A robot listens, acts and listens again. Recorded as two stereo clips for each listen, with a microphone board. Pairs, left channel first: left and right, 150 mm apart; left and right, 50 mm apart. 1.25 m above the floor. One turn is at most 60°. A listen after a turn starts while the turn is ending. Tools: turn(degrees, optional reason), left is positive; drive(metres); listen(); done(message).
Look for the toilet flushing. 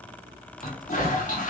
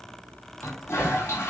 turn(degrees=60, reason="The toilet flushing: about 60° left or 120° left.")
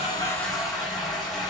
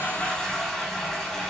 done("Found it: a toilet flushing, straight ahead.")